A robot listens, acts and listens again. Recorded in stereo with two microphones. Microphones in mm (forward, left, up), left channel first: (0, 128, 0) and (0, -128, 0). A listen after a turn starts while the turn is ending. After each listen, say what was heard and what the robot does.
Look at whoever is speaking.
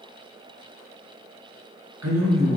Turn 90° right.
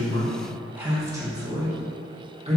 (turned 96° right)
So it is at 25° right. Turn 25° right.
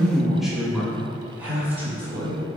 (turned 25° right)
The man speaking is now 10° right. Turn 10° right.
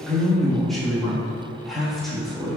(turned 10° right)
Facing the man speaking.